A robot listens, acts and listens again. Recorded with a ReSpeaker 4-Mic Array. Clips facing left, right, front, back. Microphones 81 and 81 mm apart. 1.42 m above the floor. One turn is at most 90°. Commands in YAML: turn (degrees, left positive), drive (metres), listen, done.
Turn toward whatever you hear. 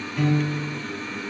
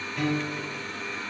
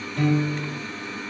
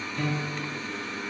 done: "Found it: a piano, straight ahead, under 1 m away."